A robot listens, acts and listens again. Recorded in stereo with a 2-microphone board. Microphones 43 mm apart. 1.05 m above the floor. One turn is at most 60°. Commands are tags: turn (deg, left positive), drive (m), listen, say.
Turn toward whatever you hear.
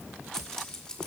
<turn deg="20"/>
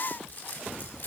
<turn deg="60"/>
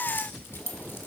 <turn deg="60"/>
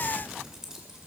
<turn deg="-15"/>
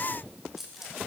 <turn deg="-10"/>
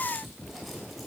<listen/>
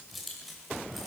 <say>Facing the keys jangling.</say>